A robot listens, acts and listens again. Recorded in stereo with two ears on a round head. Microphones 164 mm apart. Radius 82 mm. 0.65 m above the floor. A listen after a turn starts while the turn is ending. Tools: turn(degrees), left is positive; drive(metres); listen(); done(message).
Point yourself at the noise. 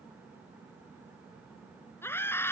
turn(degrees=30)
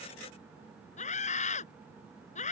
turn(degrees=135)
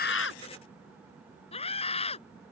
turn(degrees=35)
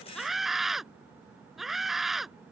done("Facing the scream.")